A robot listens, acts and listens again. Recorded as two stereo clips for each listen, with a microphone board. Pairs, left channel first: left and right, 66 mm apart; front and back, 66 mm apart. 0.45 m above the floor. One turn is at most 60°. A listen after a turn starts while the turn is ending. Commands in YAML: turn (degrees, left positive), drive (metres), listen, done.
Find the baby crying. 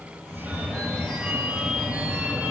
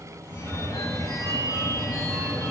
listen: true
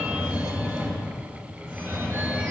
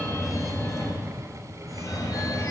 listen: true
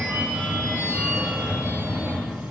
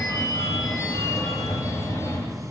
done: "I can't make out a baby crying, only a phone ringing."